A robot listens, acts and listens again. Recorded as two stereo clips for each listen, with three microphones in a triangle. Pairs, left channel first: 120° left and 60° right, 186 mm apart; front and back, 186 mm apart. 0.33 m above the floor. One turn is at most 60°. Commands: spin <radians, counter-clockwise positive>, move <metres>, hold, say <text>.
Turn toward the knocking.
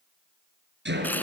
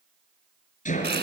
spin -0.79
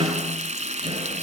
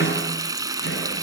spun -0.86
say Facing the knocking.